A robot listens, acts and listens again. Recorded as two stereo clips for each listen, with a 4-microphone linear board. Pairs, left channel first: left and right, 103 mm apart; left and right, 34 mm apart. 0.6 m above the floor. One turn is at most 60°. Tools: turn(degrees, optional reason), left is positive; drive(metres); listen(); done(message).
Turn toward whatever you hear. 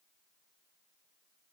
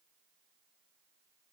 listen()
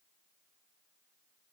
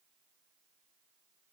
listen()
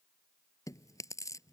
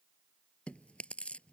turn(degrees=30, reason="The chewing: about 30° left or 150° left.")
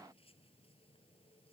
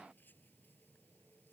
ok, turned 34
listen()
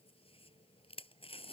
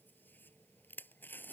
turn(degrees=60, reason="So it is at 115° left.")
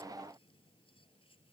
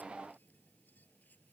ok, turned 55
turn(degrees=60, reason="Nothing new. It was at 60° left.")
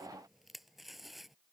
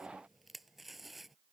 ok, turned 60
done("Facing the chewing.")